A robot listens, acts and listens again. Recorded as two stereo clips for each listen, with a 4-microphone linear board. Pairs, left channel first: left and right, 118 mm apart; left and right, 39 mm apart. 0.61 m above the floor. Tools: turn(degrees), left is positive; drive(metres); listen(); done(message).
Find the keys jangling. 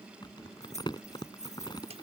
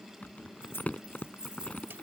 turn(degrees=90)
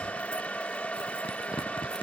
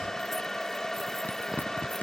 listen()
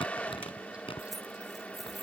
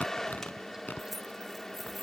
listen()
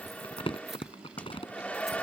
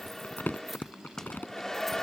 done("Facing where the keys jangling came from. I can't hear it now.")